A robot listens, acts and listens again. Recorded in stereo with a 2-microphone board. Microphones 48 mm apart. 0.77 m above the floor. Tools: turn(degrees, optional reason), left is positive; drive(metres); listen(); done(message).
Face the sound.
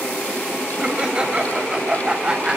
turn(degrees=-20, reason="The laughter: about 20° right or 160° right.")
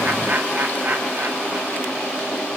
turn(degrees=-140, reason="So it is at 140° right.")
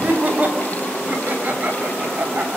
turn(degrees=-40, reason="The laughter is now 40° right.")
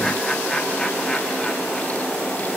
listen()
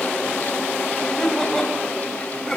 turn(degrees=10, reason="The laughter is now 10° left.")
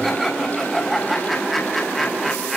done("Found it: laughter, straight ahead.")